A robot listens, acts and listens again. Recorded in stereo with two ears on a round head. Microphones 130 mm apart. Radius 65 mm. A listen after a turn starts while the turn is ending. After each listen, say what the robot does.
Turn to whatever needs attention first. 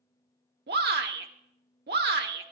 Turn 90° right.
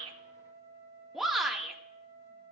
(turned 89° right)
Found it: a shout, straight ahead, 1 to 2 m away.